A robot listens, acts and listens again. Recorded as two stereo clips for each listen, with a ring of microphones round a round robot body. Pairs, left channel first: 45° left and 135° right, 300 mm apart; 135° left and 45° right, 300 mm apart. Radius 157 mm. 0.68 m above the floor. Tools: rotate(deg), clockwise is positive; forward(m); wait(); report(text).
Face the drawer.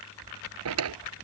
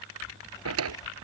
rotate(90)
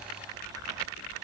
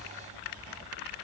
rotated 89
wait()
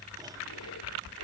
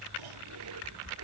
wait()
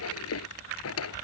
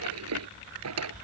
report("Found it: a drawer, straight ahead.")